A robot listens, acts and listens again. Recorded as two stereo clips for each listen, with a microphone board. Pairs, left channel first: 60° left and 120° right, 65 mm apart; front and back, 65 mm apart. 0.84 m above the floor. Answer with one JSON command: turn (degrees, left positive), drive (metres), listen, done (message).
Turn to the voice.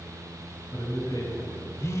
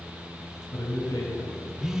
{"turn": 35}
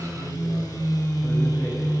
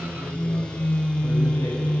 {"listen": true}
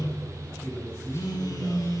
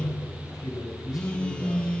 {"turn": 10}
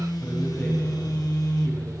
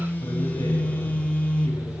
{"listen": true}
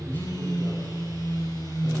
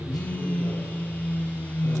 {"listen": true}
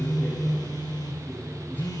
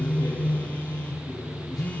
{"done": "Facing the man speaking."}